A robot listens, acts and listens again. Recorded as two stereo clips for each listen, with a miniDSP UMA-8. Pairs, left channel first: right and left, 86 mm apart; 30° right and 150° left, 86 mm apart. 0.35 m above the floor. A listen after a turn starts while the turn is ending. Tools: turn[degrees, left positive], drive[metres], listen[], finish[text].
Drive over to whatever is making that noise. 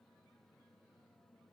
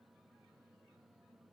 Action: listen[]
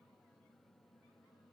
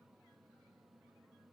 Action: listen[]
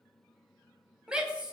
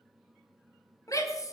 Thought: The shout: 10° left.
Action: turn[10]
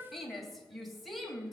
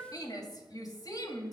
Action: drive[1.0]
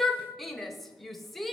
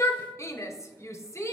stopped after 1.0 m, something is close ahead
Action: finish[Arrived at the shout, straight ahead.]